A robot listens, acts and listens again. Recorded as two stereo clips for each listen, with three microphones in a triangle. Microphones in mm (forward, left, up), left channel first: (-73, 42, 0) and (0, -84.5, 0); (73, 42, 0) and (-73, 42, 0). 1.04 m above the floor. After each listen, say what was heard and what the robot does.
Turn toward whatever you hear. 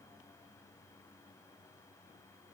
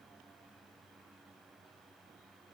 Keep listening.
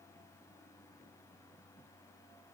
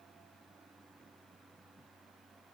Keep listening.
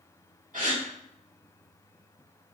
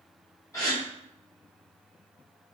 The gasp: 65° right. Turn 65° right.
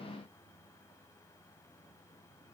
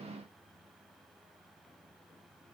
I heard a gasp from this way, but can't make it out now.